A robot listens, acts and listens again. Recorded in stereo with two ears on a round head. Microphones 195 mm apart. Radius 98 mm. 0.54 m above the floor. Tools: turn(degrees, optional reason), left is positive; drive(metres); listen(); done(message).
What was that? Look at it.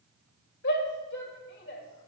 turn(degrees=50, reason="The shout: about 50° left or 130° left.")
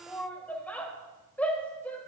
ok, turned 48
turn(degrees=10, reason="So it is at 10° left.")
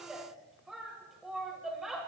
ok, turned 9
done("Facing the shout, 2 to 4 m away.")